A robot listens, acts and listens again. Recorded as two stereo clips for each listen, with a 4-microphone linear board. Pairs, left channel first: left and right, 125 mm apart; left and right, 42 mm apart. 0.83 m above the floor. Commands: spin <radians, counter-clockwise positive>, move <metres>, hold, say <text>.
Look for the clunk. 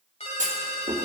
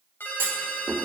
spin -1.57
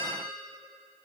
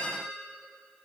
say I heard a clunk from this way, but can't make it out now.